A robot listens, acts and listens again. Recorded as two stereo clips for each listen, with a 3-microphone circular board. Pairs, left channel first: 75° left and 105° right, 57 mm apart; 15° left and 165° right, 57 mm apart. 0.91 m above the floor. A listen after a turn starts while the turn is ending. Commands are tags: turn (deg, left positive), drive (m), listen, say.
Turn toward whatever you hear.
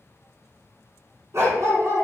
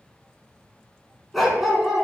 <turn deg="-80"/>
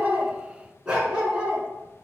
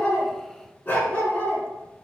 <turn deg="-40"/>
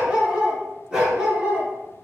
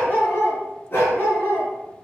<turn deg="-30"/>
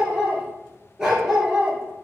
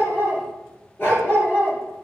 <turn deg="-25"/>
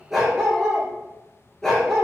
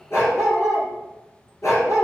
<say>Facing the dog barking, 2 to 4 m away.</say>